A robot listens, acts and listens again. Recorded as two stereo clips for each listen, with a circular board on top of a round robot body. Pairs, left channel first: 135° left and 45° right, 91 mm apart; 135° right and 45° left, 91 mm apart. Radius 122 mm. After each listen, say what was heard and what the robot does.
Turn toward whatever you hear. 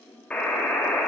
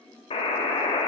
The buzzer: 145° right. Turn 145° right.
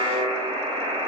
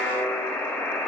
The buzzer is now 60° right. Turn 60° right.
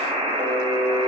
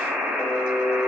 The buzzer is now 30° right. Turn 30° right.
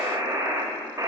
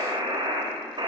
The buzzer is now 10° left. Turn 10° left.
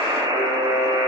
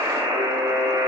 Found it: a buzzer, straight ahead, 1 to 2 m away.